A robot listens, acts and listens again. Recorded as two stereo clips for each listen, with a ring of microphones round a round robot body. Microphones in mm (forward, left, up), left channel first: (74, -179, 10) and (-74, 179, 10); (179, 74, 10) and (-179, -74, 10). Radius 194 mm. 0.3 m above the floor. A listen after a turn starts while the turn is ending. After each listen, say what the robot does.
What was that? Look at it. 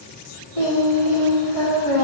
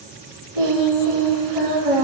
Turn 115° right.
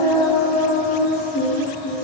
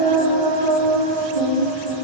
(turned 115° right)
Facing the singing.